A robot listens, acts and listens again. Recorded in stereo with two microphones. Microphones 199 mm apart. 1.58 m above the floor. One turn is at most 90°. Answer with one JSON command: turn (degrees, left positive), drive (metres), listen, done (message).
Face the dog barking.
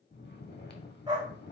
{"turn": -20}
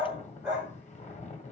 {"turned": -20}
{"done": "Found it: a dog barking, straight ahead, 2 to 4 m away."}